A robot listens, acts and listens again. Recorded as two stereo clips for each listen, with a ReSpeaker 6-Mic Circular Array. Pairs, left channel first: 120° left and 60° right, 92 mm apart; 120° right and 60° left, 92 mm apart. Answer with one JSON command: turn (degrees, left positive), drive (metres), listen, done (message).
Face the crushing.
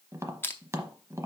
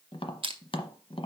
{"turn": 55}
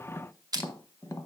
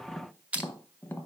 {"turn": -15}
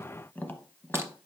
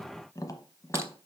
{"listen": true}
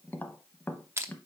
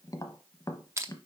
{"done": "Found it: crushing, straight ahead."}